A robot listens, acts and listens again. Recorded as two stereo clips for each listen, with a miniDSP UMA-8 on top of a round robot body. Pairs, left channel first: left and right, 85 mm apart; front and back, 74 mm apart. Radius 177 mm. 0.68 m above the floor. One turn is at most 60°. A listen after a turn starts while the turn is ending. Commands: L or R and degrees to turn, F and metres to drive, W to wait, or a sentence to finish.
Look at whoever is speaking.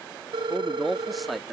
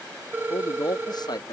Found it: a man speaking, straight ahead.